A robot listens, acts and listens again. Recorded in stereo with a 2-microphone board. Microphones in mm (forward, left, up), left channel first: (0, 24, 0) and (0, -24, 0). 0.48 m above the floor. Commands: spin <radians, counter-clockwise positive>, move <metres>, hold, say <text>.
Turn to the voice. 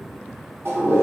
hold
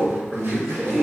spin -0.52
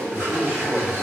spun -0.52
spin -2.44
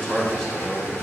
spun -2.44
say Found it: a man speaking, straight ahead.